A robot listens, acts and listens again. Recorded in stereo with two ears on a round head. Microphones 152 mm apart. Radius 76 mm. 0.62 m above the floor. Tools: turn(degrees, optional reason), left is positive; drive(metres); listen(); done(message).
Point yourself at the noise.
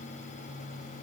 listen()
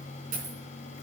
turn(degrees=-50, reason="The dropped coin: about 50° right or 130° right.")
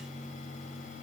listen()
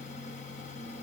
done("I heard a dropped coin, but can't make it out now. It was about straight ahead or 80° right.")